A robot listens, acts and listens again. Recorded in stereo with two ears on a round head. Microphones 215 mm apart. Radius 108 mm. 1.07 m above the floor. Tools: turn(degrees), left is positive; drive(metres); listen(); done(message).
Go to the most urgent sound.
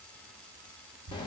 listen()
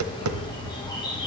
listen()
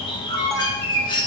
turn(degrees=30)
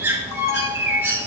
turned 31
turn(degrees=135)
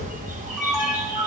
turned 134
drive(metres=1.0)
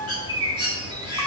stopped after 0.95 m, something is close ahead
done("Arrived at the alarm, straight ahead.")